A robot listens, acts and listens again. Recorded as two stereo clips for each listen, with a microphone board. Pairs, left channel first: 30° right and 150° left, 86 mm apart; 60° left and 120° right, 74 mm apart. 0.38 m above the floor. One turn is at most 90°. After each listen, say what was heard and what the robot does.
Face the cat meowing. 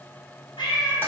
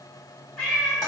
Found it: a cat meowing, straight ahead.